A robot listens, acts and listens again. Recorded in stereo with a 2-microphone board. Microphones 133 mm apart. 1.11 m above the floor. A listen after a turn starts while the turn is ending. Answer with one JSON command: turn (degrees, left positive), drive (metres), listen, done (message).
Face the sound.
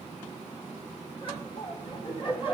{"turn": 40}
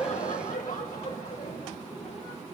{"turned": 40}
{"turn": 100}
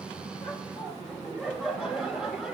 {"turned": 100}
{"done": "Found it: laughter, straight ahead, over 4 m away."}